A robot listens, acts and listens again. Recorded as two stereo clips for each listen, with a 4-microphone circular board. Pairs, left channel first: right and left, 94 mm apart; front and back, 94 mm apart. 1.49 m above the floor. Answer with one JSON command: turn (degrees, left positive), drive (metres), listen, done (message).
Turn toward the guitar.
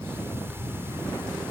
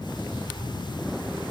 {"listen": true}
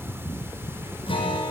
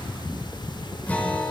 {"turn": -75}
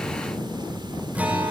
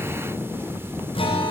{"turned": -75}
{"turn": 15}
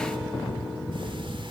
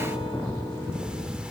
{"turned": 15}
{"listen": true}
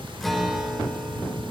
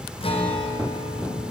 {"done": "Found it: a guitar, straight ahead."}